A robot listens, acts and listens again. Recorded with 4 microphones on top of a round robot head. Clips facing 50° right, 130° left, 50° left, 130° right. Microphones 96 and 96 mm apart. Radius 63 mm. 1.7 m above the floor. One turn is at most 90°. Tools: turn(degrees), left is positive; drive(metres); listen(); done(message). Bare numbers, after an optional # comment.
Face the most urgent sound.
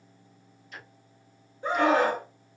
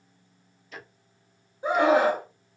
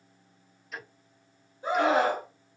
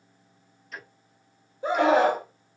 # The scream: 150° right.
turn(-90)
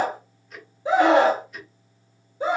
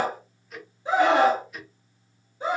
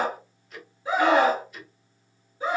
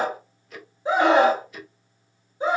# The scream is now 65° right.
turn(-65)
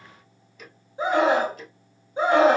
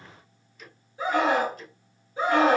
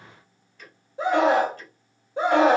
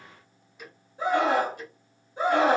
# The scream is now 20° left.
turn(20)
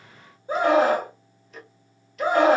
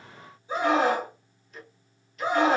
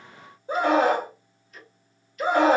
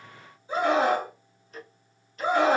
done("Found it: a scream, straight ahead, 2 to 4 m away.")